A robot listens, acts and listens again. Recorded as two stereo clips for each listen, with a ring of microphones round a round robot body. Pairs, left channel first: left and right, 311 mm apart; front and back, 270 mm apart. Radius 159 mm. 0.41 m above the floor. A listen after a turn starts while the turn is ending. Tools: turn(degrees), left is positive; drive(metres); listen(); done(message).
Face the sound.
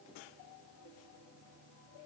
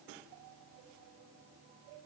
listen()
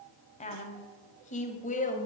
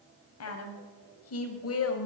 turn(degrees=25)
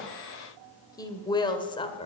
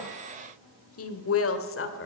turn(degrees=20)
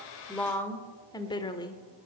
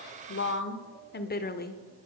turn(degrees=20)
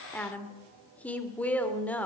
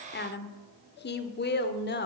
done("Facing the woman speaking.")